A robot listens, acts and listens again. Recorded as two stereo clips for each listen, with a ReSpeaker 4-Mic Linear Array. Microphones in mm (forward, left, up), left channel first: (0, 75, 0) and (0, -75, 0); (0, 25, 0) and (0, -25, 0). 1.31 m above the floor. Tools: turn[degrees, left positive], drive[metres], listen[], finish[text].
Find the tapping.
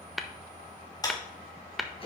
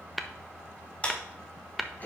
Action: turn[30]
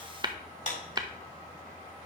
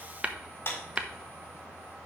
Thought: So it is at 30° right.
Action: turn[-30]
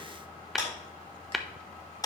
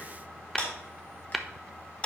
Action: finish[Facing the tapping, under 1 m away.]